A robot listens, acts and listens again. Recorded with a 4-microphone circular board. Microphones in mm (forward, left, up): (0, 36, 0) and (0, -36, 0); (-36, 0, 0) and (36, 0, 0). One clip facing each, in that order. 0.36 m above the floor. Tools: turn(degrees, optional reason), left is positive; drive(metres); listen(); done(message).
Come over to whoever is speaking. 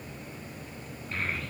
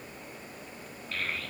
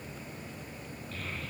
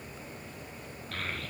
turn(degrees=25, reason="The child speaking: 25° left.")
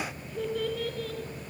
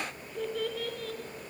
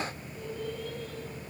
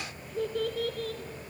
drive(metres=1.0)
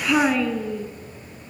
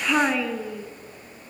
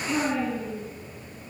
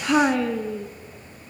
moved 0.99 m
drive(metres=1.0)
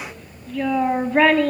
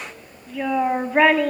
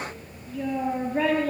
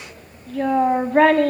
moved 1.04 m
turn(degrees=-10, reason="The child speaking is now 10° right.")
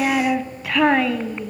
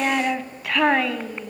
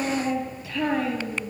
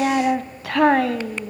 drive(metres=1.0)
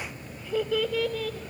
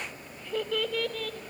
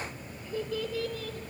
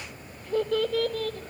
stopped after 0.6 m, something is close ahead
done("Arrived at the child speaking, straight ahead.")